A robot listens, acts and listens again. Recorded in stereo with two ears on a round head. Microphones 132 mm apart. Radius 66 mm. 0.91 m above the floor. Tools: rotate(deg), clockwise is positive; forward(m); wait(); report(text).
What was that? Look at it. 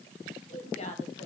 rotate(-40)
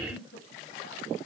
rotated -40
rotate(-105)
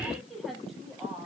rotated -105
report("Found it: a woman speaking, straight ahead.")